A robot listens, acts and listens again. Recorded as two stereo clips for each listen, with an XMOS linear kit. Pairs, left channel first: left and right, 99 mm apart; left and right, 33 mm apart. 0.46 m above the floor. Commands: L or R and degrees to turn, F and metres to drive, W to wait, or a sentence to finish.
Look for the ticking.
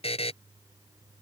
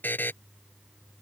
W
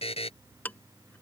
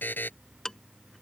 L20
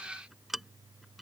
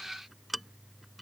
Found it: ticking, straight ahead.